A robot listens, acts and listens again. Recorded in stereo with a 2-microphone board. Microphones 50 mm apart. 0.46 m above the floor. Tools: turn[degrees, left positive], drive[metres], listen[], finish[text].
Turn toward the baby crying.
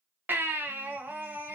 Thought: The baby crying: about 40° right or 140° right.
Action: turn[-40]
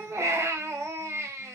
Thought: So it is at 95° right.
Action: turn[-95]
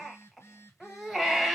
Action: finish[Found it: a baby crying, straight ahead.]